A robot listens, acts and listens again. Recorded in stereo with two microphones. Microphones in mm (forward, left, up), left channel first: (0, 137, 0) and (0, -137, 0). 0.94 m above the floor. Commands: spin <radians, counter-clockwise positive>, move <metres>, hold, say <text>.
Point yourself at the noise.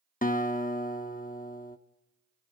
spin 0.52
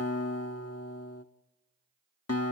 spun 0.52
spin 2.09
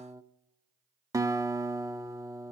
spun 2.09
spin -0.17
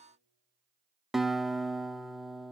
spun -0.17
say Found it: a guitar, straight ahead, under 1 m away.